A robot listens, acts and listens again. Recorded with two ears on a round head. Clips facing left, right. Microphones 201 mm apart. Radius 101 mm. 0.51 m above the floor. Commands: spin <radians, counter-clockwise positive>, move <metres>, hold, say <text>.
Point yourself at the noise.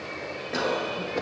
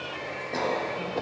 spin 0.52
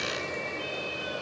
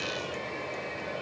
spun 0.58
hold
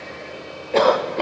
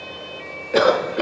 spin -0.35
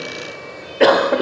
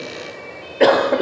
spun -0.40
say Facing the cough.